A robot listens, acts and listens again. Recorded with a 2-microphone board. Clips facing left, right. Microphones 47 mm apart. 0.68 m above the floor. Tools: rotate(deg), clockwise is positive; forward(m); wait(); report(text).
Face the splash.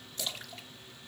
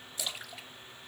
rotate(30)
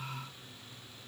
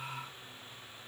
wait()
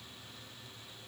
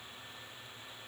report("I heard a splash, but can't make it out now. It was about 20° left or 140° right.")